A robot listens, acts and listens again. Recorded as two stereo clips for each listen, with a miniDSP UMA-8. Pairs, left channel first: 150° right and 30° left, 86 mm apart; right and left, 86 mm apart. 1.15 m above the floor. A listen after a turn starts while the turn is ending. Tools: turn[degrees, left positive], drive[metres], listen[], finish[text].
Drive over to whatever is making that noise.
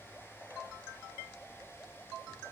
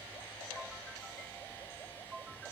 Action: listen[]
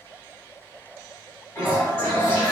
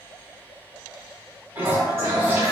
Thought: The toilet flushing: 155° left.
Action: turn[155]
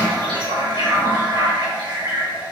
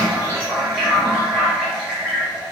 Thought: The toilet flushing is now 10° left.
Action: turn[10]
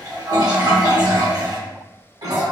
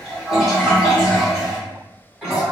Action: drive[1.0]
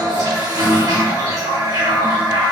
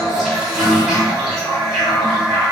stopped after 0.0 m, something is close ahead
Action: finish[Blocked. The toilet flushing is further on, straight ahead.]